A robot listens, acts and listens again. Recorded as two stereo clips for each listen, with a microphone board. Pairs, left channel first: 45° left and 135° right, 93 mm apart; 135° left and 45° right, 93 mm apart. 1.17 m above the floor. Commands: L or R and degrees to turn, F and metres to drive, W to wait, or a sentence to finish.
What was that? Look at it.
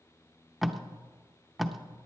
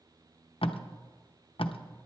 L135
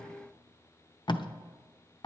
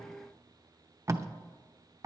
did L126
L10
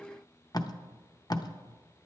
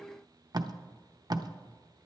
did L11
Found it: tape being pulled, straight ahead.